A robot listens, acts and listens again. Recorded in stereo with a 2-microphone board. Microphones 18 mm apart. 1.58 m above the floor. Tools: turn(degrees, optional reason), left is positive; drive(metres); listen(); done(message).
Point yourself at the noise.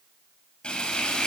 turn(degrees=90)
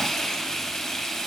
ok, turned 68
turn(degrees=30, reason="So it is at 30° left.")
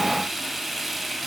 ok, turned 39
done("Found it: frying, straight ahead, over 4 m away.")